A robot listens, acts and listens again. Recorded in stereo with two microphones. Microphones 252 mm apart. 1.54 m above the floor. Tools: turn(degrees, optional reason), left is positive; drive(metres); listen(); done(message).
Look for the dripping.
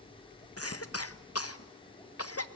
listen()
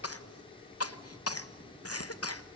listen()
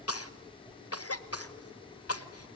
done("I can't make out dripping to turn to.")